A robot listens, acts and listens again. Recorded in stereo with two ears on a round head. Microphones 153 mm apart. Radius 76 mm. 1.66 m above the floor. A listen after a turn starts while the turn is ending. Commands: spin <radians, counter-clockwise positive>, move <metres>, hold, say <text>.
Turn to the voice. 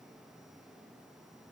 hold
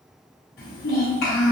spin 1.05
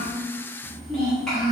say Found it: a child speaking, straight ahead.